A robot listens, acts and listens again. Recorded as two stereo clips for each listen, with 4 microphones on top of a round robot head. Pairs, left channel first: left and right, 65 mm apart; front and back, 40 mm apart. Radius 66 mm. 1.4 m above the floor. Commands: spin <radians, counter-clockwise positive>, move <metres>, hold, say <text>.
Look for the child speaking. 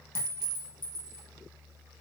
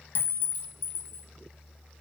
hold
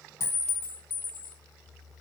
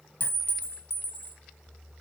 hold
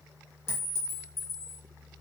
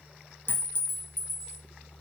say I can't make out a child speaking, only a clink.